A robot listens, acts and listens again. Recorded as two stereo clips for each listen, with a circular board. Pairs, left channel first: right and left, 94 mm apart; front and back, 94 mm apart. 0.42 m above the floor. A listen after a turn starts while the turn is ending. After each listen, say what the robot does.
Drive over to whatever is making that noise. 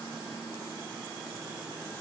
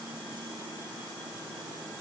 Keep listening.
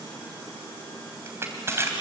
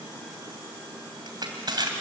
Turn 150° left.
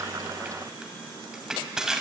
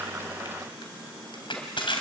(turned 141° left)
Drive 1.0 m forward.
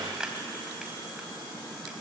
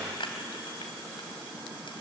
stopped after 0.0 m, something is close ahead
Turn 10° left.
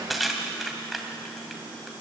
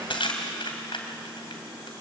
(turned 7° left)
Blocked. The crushing is further on, straight ahead.